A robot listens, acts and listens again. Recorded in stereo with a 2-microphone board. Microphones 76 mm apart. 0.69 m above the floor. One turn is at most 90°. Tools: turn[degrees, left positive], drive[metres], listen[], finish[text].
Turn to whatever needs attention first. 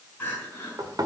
Thought: The crying: about 25° left or 155° left.
Action: turn[25]
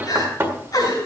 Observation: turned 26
Thought: So it is at 130° left.
Action: turn[90]
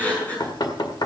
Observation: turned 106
Thought: The crying is now 20° left.
Action: turn[20]
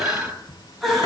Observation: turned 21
Action: finish[Facing the crying.]